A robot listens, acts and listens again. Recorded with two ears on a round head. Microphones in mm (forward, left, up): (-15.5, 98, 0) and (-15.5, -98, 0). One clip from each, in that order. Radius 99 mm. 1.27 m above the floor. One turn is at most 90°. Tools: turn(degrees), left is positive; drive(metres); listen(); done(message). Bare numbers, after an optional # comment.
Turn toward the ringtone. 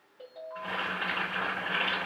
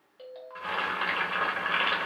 # The ringtone: about 65° right or 115° right.
turn(-65)
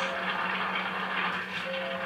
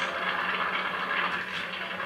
listen()
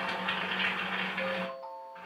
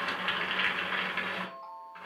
done("Facing the ringtone.")